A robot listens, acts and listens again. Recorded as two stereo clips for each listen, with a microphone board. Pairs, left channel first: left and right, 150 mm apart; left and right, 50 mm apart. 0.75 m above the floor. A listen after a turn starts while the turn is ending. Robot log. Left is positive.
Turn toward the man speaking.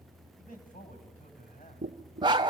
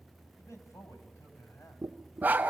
note: The man speaking: about 70° left or 110° left.
cmd yaw +70
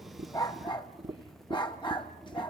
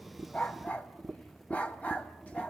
cmd idle
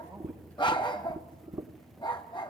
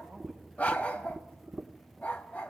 cmd idle
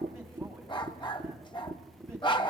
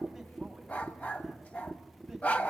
end: I heard a man speaking, but can't make it out now. It was about straight ahead or 40° left.